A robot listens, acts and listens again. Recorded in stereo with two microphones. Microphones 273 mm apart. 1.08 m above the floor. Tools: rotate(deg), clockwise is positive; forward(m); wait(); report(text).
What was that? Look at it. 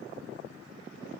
wait()
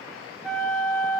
rotate(-30)
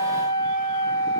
rotate(-150)
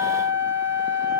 report("Facing the flute.")